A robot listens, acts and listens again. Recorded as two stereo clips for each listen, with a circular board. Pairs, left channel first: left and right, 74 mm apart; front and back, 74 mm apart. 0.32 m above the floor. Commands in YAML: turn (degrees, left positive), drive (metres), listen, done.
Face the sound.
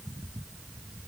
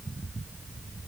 listen: true
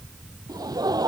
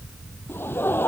turn: -60
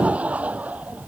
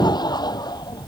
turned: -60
turn: -20
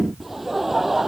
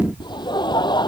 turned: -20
done: "Facing the laughter."